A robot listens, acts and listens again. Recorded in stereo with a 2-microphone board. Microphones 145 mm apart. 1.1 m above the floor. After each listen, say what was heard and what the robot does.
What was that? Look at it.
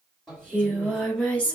Turn 30° left.
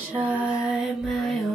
Turn 30° left.
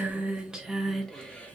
Turn 30° left.
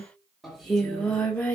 Turn 30° left.
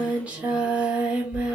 So it is at 10° right. Turn 10° right.
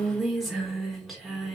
Found it: singing, straight ahead, 1 to 2 m away.